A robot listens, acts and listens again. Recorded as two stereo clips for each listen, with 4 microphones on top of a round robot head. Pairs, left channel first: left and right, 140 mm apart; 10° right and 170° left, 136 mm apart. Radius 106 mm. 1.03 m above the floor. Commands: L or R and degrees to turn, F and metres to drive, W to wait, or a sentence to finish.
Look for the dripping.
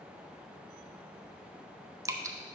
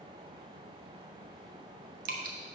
R160
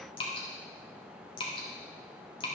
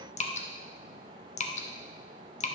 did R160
L25
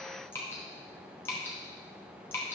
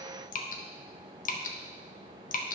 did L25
L10
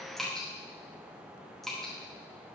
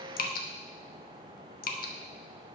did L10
Found it: dripping, straight ahead, under 1 m away.